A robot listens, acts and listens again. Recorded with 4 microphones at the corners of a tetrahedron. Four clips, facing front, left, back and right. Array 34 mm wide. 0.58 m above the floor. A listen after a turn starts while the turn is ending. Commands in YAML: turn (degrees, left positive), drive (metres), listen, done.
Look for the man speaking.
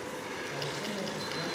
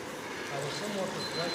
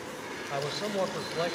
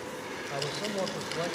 turn: -170
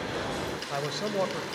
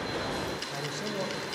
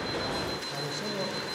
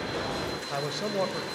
turn: -40
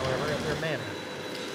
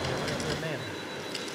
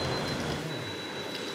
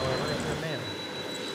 done: "Facing the man speaking, 2 to 4 m away."